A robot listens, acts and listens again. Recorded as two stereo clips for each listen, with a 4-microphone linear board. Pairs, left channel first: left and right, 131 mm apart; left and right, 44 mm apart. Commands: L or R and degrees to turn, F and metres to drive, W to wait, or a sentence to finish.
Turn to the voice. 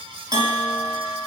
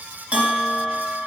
W
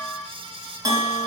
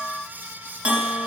W
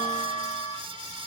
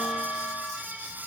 I can't make out anyone speaking, only a bell.